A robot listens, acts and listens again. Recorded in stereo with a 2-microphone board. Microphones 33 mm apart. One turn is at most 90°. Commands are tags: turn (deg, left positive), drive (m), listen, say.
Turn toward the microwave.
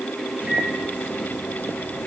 <turn deg="-45"/>
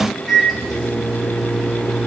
<say>Found it: a microwave, straight ahead, 2 to 4 m away.</say>